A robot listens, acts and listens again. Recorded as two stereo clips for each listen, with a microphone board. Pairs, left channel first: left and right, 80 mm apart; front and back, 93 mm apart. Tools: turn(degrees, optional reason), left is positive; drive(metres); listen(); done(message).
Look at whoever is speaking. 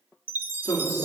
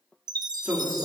turn(degrees=115, reason="The woman speaking: 115° left.")
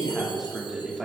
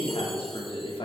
done("Facing the woman speaking.")